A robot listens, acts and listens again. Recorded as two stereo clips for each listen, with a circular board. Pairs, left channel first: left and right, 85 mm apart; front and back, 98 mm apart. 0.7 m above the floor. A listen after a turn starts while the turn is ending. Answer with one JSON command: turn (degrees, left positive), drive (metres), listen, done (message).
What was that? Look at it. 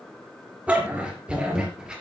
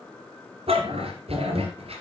{"turn": -175}
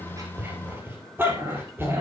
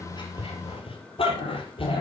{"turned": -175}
{"turn": -25}
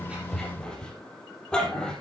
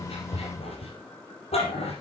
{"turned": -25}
{"turn": 10}
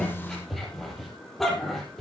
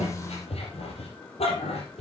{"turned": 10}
{"done": "Found it: a dog barking, straight ahead."}